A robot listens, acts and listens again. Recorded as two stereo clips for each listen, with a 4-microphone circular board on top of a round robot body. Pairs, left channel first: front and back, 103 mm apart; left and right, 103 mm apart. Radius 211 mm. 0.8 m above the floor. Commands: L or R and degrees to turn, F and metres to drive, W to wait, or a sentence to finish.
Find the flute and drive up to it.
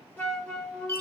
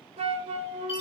R75
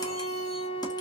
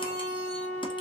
L15
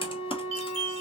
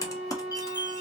F1.0
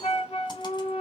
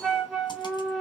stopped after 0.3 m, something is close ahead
Blocked. The flute is further on, straight ahead.